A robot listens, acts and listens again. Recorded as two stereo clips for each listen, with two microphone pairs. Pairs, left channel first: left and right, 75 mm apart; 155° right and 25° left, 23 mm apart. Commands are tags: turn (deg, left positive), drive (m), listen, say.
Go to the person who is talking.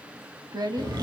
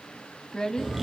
<turn deg="-100"/>
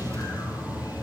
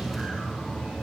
<listen/>
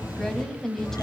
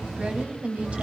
<turn deg="10"/>
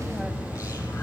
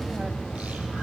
<listen/>
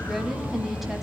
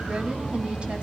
<listen/>
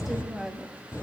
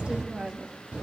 <drive m="1.0"/>
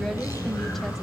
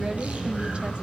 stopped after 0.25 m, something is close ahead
<listen/>
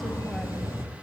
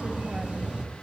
<listen/>
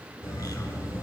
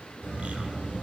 <say>Facing where the woman speaking came from. I can't hear it now. I did not reach it.</say>